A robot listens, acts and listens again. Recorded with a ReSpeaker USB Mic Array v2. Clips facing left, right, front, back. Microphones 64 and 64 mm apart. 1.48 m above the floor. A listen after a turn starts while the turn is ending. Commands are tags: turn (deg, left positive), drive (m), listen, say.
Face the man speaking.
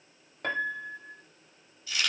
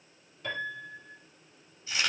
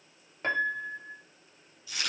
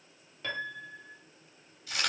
<listen/>
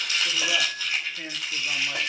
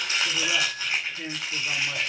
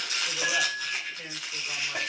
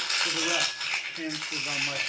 <turn deg="165"/>
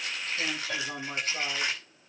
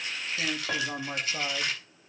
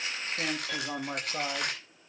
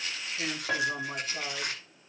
<turn deg="-25"/>
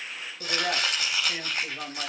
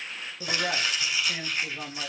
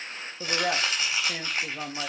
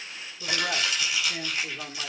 <say>Found it: a man speaking, straight ahead.</say>